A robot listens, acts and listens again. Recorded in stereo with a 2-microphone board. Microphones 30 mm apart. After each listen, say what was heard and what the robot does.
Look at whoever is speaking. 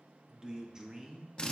The man speaking: about 20° right or 160° right. Turn 20° right.
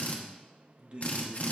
So it is at 135° right. Turn 135° right.
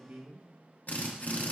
The man speaking is now 65° right. Turn 65° right.
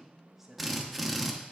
The man speaking is now 10° right. Turn 10° right.
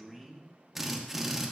Facing the man speaking.